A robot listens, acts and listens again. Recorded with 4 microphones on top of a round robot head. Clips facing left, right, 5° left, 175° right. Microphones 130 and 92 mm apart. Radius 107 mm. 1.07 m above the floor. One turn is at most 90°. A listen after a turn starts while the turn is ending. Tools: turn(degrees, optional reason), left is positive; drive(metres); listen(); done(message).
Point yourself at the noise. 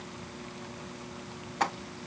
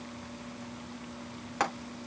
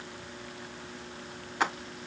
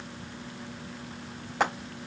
turn(degrees=-90, reason="The frying: 115° right.")
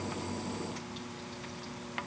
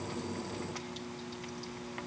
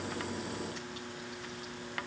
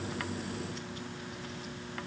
turn(degrees=-25, reason="Nothing new. It was at 25° right.")
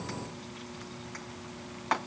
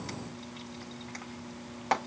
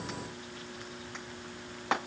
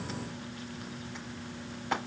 turn(degrees=-35, reason="The frying is now 35° right.")
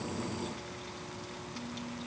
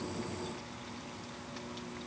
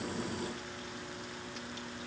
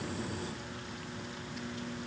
listen()
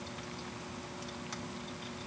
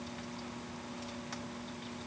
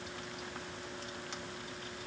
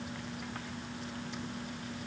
listen()
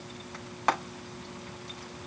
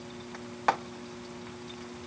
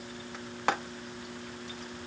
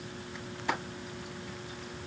done("Facing the frying, over 4 m away.")